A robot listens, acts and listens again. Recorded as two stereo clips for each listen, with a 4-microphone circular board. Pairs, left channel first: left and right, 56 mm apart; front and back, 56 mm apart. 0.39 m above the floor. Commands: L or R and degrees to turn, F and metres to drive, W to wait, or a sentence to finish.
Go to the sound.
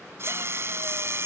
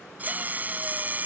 R125
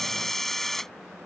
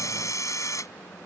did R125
F1.0
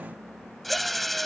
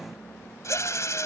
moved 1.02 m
F1.0
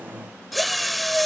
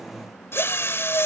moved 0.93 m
F1.0
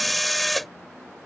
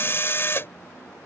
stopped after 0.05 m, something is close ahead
I am next to the drill.